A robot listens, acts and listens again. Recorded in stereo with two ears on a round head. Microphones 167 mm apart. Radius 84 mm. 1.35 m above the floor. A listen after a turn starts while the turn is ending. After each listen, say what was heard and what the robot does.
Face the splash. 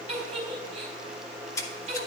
The splash: about 15° left or 165° left. Turn 15° left.
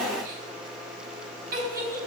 Keep listening.
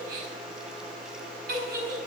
I heard a splash, but can't make it out now. It was about straight ahead or 150° left.